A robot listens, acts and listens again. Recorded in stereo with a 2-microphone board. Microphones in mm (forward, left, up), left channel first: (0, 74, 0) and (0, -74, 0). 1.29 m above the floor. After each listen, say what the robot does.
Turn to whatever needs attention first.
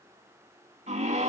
Turn 55° right.
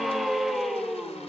Found it: a scream, straight ahead, 2 to 4 m away.